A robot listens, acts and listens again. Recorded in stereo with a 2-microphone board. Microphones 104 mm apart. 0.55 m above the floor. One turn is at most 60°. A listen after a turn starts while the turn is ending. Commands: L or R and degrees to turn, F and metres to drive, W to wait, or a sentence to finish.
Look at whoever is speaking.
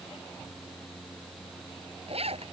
W
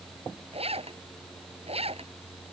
W
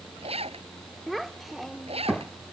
L30
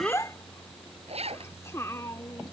L60
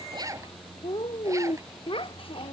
L60
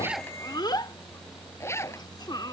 L45
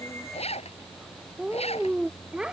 R10
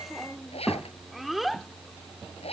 Found it: a child speaking, straight ahead.